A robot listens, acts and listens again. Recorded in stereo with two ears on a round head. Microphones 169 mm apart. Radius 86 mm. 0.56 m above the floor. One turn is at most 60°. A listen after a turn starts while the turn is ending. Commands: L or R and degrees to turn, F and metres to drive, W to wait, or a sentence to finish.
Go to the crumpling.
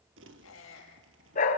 R60
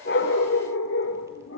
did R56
W
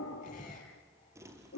R15
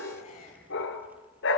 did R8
W
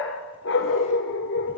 W
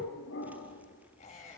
I heard crumpling from this way, but can't make it out now. I did not reach it.